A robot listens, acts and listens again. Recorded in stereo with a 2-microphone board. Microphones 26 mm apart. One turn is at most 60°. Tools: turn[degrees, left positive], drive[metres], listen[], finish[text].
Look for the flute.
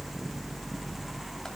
Action: listen[]
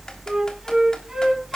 Thought: The flute: about 20° right or 160° right.
Action: turn[-20]
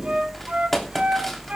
Action: listen[]
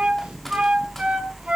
Thought: So it is at 140° right.
Action: turn[-60]
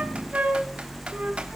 Thought: Nothing new. It was at 80° right.
Action: turn[-60]
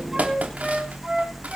Thought: Nothing new. It was at 20° right.
Action: turn[-20]
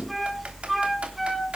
Action: finish[I heard a flute from this way, but can't make it out now.]